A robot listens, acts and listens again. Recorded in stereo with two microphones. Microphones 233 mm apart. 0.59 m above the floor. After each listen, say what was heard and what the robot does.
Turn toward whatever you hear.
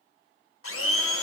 The blender: about 65° left or 115° left. Turn 65° left.
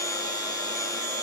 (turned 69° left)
So it is at 15° left. Turn 15° left.
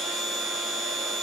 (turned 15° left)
Found it: a blender, straight ahead.